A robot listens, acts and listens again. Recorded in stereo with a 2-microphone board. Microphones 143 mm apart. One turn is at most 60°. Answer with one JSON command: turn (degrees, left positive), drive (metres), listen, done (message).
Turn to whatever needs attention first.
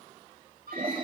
{"turn": -60}
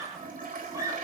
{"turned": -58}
{"turn": -20}
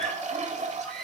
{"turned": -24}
{"done": "Found it: a scream, straight ahead, over 4 m away."}